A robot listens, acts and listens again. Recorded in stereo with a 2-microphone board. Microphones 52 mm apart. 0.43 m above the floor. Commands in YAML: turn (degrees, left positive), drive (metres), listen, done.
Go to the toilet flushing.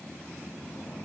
listen: true
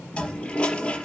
turn: 20
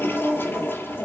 turn: 140
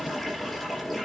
drive: 1.0
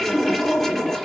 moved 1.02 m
drive: 1.0
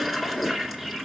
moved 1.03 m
drive: 1.0
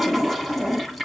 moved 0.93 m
drive: 1.0
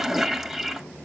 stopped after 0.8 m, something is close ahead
turn: -10
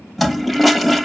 done: "I am next to the toilet flushing."